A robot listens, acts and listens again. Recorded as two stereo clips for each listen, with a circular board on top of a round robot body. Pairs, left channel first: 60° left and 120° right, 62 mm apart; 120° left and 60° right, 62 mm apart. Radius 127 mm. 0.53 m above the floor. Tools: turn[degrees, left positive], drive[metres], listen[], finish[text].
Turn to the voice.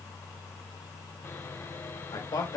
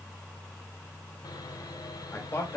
Thought: The man speaking: 70° left.
Action: turn[70]
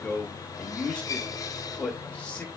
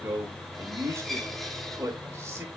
Thought: The man speaking is now 10° right.
Action: turn[-10]
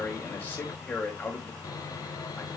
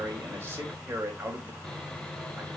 Action: finish[Found it: a man speaking, straight ahead, over 4 m away.]